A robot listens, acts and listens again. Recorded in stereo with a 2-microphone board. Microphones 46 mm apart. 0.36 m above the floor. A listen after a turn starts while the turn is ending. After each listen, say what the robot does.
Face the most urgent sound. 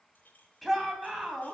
Turn 30° left.
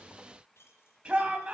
Turn 30° right.
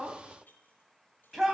Facing the shout.